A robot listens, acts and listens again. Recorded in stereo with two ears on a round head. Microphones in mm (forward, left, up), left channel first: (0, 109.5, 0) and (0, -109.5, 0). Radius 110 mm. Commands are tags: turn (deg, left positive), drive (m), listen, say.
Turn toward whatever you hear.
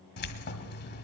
<turn deg="40"/>
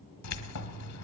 <turn deg="95"/>
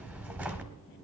<turn deg="-10"/>
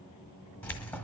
<say>Found it: keys jangling, straight ahead.</say>